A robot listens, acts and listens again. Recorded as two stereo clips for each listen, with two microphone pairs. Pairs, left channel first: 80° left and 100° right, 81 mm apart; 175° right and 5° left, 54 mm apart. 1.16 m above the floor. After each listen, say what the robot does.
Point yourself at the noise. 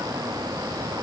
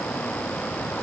Keep listening.
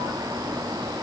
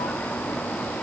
Keep listening.
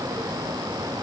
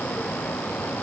I can't make out anything to turn to.